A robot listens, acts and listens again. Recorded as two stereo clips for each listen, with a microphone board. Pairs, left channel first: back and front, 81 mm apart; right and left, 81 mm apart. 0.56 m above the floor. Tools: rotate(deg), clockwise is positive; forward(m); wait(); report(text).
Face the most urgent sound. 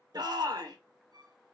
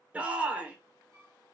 rotate(-20)
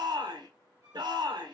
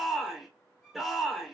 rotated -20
report("Found it: a shout, straight ahead, 1 to 2 m away.")